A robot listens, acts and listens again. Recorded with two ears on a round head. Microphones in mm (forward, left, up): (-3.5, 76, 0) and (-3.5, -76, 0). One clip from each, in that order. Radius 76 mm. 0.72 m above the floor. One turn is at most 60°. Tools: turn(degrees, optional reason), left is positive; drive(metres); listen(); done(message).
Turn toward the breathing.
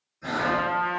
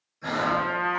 turn(degrees=-25, reason="The breathing: about 25° right or 155° right.")
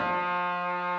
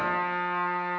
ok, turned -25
listen()
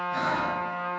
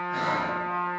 listen()
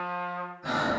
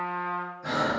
done("Facing the breathing, under 1 m away.")